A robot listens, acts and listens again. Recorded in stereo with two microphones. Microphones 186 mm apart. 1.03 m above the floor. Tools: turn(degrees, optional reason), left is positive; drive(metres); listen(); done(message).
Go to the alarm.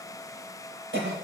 listen()
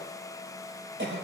listen()
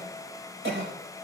done("I can't make out an alarm to turn to.")